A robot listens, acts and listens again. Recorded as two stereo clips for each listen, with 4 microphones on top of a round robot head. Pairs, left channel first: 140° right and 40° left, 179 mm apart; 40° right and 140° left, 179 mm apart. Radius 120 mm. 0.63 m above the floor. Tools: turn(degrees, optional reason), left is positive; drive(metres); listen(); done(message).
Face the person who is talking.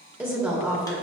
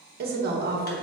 turn(degrees=115, reason="The woman speaking: 115° left.")
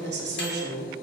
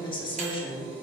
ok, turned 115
turn(degrees=20, reason="The woman speaking is now 20° left.")
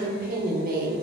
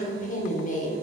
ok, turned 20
done("Facing the woman speaking, 1 to 2 m away.")